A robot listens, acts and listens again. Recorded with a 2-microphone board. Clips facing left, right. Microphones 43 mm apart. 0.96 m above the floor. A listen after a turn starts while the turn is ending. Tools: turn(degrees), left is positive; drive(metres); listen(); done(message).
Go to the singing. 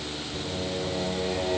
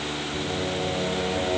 turn(degrees=30)
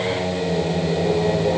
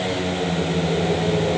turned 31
turn(degrees=145)
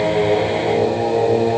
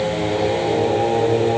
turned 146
drive(metres=1.0)
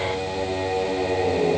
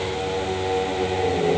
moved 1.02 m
drive(metres=1.0)
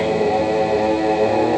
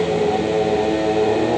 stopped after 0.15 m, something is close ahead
done("Arrived at the singing, straight ahead.")